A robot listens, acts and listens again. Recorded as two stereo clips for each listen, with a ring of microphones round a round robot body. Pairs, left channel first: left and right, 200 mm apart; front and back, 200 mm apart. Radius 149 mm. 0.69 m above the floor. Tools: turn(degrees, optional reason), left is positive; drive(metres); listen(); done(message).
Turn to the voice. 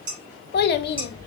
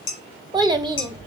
turn(degrees=115, reason="The child speaking: 115° left.")
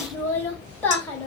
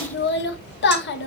turn(degrees=10, reason="The child speaking is now 10° left.")
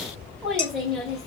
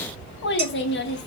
done("Facing the child speaking, 1 to 2 m away.")